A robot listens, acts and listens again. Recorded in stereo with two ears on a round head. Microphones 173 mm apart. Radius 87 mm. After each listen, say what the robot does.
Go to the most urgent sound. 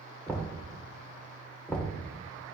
Keep listening.
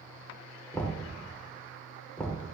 Keep listening.
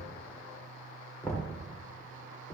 I can't make out anything urgent to turn to.